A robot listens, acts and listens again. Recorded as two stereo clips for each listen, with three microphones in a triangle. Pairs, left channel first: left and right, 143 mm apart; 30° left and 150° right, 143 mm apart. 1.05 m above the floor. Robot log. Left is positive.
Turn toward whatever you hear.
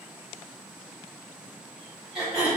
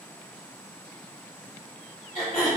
end: Facing the throat clearing, 2 to 4 m away.